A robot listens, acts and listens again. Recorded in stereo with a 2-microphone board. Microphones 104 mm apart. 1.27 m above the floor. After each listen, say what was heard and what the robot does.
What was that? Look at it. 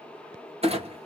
Turn 90° right.
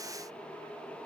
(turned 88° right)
Facing where the clunk came from. I can't hear it now.